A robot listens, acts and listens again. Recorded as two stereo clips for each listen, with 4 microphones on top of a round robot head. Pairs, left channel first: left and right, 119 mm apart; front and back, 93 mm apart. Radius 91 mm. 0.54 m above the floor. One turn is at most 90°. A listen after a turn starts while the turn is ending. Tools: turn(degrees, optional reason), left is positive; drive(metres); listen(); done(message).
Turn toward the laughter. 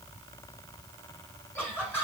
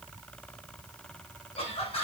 turn(degrees=15, reason="The laughter: 15° left.")
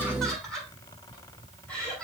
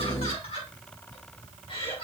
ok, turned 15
turn(degrees=10, reason="The laughter is now 10° left.")
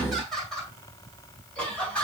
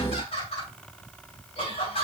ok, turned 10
turn(degrees=10, reason="The laughter is now 10° left.")
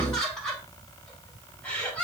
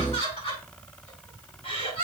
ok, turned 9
turn(degrees=10, reason="The laughter is now 10° left.")
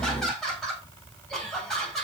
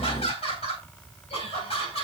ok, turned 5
done("Found it: laughter, straight ahead, over 4 m away.")